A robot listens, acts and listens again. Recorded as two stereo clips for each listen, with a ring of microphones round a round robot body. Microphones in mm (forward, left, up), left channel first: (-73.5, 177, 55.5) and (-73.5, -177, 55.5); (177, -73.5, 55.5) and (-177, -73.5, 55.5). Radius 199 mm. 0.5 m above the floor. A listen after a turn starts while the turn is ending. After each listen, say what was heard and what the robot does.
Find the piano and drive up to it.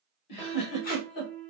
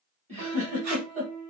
The piano: 145° right. Turn 145° right.
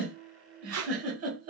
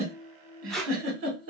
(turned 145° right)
The piano is now 30° right. Turn 30° right.
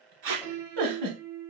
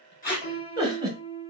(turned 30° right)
Drive 1.0 m forward.
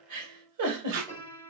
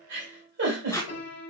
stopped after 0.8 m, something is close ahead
The piano is now 10° left. Turn 10° left.
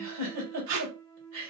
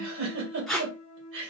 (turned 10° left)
Arrived at the piano, straight ahead.